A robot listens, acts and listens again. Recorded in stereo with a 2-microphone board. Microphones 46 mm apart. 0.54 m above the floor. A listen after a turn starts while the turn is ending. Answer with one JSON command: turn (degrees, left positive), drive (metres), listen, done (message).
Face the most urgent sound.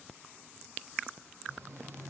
{"listen": true}
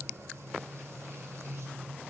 {"listen": true}
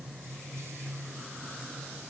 {"done": "I can't make out anything urgent to turn to."}